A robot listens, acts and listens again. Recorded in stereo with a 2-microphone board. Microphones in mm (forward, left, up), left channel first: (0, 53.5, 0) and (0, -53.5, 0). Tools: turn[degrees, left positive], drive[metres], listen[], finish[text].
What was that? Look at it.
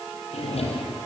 Action: turn[90]
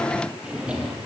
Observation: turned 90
Thought: So it is at 10° right.
Action: turn[-10]
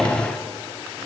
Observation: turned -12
Action: finish[Found it: a drawer, straight ahead, over 4 m away.]